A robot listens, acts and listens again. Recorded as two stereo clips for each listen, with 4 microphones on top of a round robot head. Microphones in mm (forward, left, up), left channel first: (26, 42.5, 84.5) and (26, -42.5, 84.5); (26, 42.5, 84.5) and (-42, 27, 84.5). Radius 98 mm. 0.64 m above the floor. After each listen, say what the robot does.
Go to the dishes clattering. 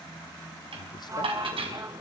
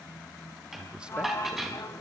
Turn 80° right.
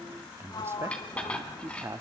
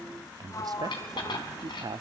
Turn 15° left.
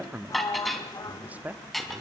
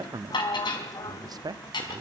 Drive 1.0 m forward.
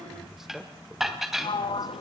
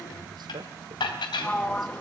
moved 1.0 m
Drive 1.0 m forward.
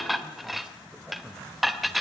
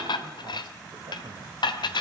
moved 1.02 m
Drive 1.0 m forward.
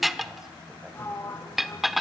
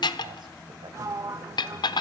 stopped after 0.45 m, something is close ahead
I am next to the dishes clattering.